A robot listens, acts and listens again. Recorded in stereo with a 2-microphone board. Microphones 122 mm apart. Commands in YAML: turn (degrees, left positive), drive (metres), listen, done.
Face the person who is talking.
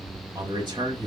turn: -40
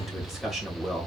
done: "Facing the man speaking."